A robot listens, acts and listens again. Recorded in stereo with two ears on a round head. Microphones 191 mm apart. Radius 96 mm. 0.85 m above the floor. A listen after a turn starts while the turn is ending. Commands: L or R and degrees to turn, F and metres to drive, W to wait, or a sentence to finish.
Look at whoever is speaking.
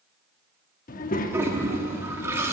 L40
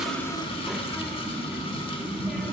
Found it: a child speaking, straight ahead, under 1 m away.